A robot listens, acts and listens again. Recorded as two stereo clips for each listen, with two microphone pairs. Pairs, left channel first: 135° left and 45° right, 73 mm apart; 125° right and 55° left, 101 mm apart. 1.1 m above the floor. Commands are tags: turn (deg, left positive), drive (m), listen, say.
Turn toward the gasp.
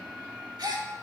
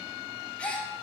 <turn deg="-45"/>
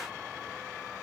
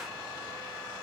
<say>I heard a gasp from this way, but can't make it out now.</say>